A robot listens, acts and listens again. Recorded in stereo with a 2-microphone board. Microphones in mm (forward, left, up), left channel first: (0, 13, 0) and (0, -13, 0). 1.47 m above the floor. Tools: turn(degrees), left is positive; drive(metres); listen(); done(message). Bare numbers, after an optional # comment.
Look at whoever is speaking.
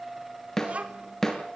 # The child speaking: about 50° right or 130° right.
turn(-50)
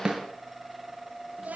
# So it is at 80° right.
turn(-80)
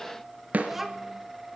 # The child speaking is now 15° right.
turn(-15)
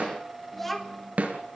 done("Facing the child speaking, 2 to 4 m away.")